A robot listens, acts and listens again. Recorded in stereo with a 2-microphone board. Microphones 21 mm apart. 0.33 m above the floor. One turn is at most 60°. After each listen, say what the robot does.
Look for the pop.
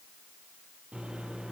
Keep listening.
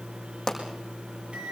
Turn 20° left.
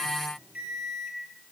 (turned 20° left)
Keep listening.
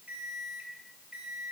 I heard a pop, but can't make it out now. It was about straight ahead or 140° left.